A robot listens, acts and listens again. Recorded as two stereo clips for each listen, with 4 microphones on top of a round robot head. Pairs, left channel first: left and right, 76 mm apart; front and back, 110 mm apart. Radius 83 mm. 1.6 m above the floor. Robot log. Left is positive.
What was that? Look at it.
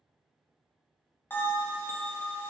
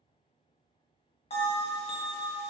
note: The bell: 25° left.
cmd yaw +25
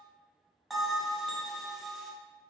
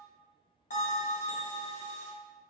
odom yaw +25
end: Found it: a bell, straight ahead.